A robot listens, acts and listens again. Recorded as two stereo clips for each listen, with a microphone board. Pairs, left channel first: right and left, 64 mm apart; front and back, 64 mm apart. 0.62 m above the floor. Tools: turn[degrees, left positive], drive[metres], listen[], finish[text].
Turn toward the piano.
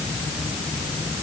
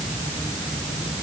Action: listen[]
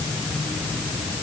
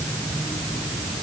Action: listen[]
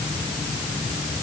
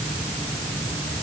Action: finish[I can't make out a piano.]